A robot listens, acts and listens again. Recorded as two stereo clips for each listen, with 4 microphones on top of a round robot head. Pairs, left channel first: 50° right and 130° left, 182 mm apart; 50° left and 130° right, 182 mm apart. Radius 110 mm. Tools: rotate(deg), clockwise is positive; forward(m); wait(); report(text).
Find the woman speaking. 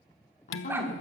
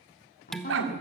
report("Facing the woman speaking.")